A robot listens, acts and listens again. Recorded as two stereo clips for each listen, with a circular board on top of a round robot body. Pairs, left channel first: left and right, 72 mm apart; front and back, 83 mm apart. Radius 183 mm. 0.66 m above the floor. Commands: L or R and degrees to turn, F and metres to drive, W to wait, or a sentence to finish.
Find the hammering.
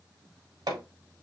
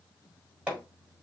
R105
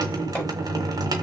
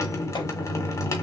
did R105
W
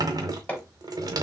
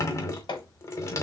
L20
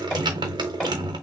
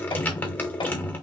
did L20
Facing the hammering.